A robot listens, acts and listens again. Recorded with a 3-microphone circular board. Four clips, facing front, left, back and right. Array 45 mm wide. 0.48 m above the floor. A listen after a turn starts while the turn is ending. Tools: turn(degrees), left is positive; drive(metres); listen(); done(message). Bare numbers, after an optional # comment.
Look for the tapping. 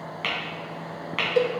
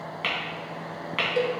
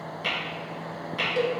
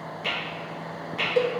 # The tapping: 45° left.
turn(45)
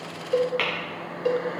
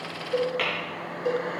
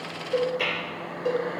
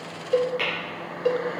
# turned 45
# The tapping is now 10° left.
turn(10)
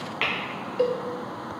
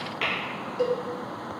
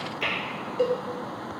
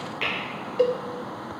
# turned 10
done("Facing the tapping, 2 to 4 m away.")